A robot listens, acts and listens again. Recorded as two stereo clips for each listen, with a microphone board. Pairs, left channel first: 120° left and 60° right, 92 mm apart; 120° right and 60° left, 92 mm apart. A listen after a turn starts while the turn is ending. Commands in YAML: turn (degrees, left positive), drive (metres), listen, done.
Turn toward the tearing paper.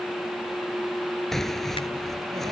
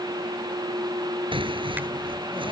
turn: 35
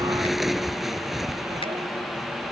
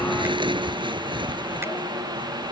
turn: 30
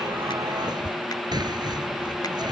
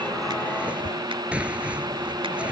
turn: -15
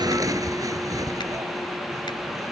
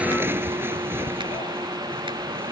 done: "Facing the tearing paper."